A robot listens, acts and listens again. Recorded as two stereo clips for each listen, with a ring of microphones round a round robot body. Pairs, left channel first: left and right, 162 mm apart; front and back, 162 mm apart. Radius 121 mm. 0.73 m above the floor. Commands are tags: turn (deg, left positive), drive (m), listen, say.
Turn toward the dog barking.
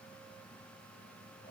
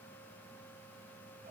<listen/>
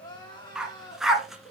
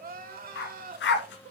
<say>Found it: a dog barking, straight ahead.</say>